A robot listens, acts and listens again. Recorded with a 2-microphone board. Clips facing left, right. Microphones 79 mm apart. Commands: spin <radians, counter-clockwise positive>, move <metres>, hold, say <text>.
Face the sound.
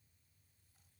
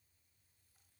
hold
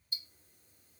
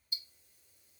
spin 0.61
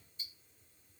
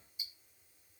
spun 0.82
spin -0.17
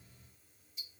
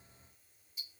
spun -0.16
say Facing the ticking.